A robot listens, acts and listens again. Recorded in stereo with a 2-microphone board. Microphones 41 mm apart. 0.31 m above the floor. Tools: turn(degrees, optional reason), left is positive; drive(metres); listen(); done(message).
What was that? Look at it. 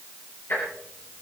turn(degrees=55, reason="The ticking: about 55° left or 125° left.")
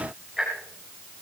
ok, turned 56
done("Found it: ticking, straight ahead, over 4 m away.")